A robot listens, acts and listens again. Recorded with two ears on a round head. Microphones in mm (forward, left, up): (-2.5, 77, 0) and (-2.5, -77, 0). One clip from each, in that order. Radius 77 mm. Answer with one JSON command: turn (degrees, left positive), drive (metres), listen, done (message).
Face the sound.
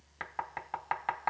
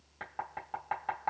{"turn": 55}
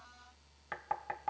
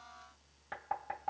{"turn": 55}
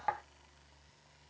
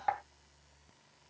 {"turn": 15}
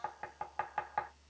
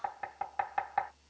{"done": "Facing the knocking."}